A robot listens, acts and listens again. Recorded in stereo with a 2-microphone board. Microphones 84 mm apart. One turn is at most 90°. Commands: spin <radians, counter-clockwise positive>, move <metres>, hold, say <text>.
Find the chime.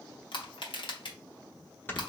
hold
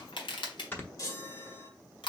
spin 0.79
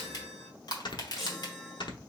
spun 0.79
say Found it: a chime, straight ahead.